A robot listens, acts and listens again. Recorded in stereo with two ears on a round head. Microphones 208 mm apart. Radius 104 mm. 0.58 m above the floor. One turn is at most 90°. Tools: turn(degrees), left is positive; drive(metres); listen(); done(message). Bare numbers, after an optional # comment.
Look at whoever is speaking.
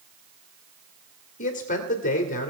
# The man speaking: about 35° left or 145° left.
turn(35)
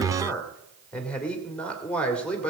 done("Facing the man speaking.")